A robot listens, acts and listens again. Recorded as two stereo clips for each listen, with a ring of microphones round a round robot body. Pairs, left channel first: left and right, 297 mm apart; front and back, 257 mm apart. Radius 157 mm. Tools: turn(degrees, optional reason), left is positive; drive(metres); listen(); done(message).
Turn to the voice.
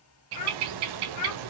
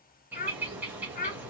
turn(degrees=60, reason="The child speaking: 60° left.")
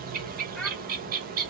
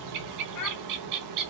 listen()
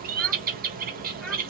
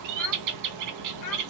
listen()
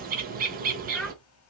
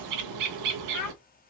done("Facing the child speaking.")